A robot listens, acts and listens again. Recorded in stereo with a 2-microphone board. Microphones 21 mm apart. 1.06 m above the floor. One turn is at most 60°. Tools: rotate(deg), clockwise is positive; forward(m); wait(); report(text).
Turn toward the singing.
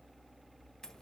wait()
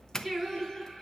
rotate(20)
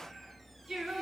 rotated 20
rotate(35)
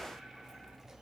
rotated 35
wait()
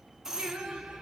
rotate(60)
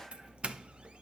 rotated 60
rotate(55)
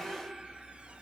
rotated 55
rotate(50)
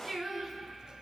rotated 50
report("Facing the singing.")